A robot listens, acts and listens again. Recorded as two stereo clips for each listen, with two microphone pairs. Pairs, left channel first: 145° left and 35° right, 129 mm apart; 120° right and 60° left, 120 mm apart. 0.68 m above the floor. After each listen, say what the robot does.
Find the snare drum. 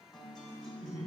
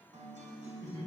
Keep listening.
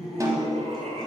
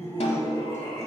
Turn 95° right.
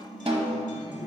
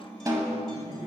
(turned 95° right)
Found it: a snare drum, straight ahead, under 1 m away.